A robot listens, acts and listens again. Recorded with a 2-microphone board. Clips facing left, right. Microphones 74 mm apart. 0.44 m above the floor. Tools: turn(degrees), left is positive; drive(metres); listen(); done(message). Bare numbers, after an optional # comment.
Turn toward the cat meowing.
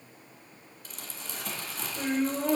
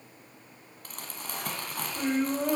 listen()
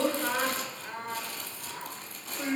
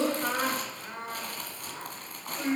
listen()
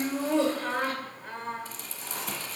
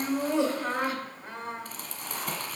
done("I can't make out a cat meowing to turn to.")